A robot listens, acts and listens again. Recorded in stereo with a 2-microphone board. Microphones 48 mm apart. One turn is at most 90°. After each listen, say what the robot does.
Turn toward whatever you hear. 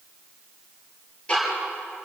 Turn 25° left.
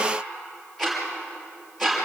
Facing the ticking.